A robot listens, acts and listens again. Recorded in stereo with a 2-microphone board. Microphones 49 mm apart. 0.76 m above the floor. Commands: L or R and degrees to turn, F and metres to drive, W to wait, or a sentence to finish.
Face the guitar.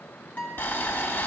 L35
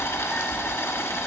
W
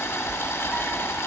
W
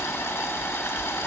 I heard a guitar, but can't make it out now. It was about straight ahead or 110° left.